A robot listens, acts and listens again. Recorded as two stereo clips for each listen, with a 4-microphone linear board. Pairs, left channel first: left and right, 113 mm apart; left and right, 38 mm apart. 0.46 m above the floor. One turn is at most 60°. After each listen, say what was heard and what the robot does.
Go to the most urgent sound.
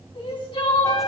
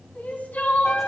The crying: about 45° left or 135° left. Turn 45° left.
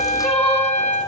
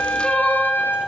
Drive 1.0 m forward.
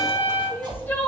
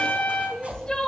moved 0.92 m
The crying is now 20° left. Turn 20° left.
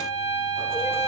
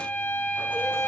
Keep listening.
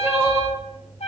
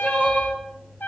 Drive 1.0 m forward.
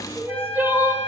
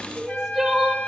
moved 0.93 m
The crying is now 20° right. Turn 20° right.
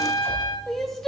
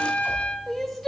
Drive 1.0 m forward.
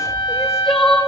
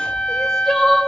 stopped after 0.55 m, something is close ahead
I am next to the crying.